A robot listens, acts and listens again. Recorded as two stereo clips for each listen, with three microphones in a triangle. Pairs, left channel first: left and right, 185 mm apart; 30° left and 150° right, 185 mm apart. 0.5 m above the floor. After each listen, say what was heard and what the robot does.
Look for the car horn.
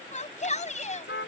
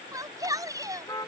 The car horn: 100° left. Turn 100° left.
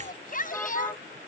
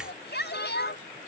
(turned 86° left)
Nothing new. It was at 15° left. Turn 15° left.
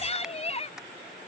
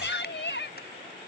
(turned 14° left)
Keep listening.
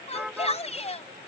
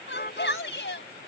Facing the car horn.